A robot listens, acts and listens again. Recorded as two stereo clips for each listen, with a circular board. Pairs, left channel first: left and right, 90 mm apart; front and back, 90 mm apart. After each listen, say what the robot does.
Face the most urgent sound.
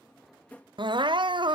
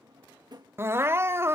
Turn 120° right.
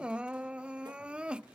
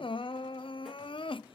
Turn 10° right.
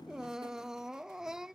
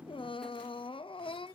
Found it: crying, straight ahead.